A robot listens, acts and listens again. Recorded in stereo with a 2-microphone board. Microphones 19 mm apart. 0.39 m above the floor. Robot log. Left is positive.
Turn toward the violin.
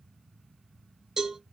cmd idle
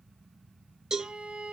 cmd yaw -90
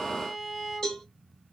end: Facing the violin.